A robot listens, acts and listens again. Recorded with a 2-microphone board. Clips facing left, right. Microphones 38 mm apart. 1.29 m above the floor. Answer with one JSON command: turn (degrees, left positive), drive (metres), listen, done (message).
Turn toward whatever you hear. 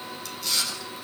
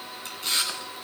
{"turn": -35}
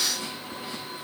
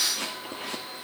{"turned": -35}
{"turn": -105}
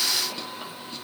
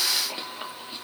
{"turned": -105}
{"turn": -20}
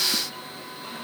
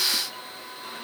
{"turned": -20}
{"listen": true}
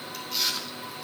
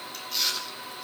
{"done": "Facing the chewing, 2 to 4 m away."}